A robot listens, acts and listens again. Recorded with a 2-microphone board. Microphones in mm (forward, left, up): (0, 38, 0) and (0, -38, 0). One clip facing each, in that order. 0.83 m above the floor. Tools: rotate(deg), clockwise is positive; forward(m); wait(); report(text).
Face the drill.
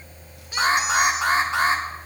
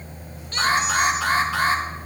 wait()
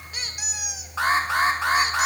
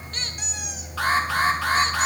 wait()
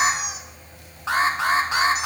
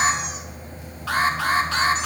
report("I can't make out a drill, only a squeak and an alarm.")